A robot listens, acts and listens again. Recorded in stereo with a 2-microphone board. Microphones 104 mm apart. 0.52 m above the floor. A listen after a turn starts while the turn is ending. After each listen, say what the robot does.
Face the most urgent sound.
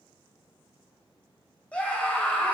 Turn 30° left.
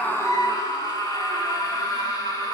Turn 135° left.
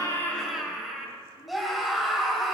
Found it: a scream, straight ahead.